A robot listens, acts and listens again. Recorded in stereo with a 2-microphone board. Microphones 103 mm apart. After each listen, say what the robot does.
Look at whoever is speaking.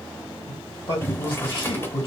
Turn 55° left.
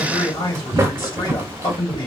Turn 55° left.
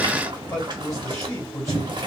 Turn 35° left.
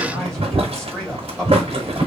Keep listening.
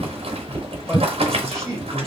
Facing the man speaking.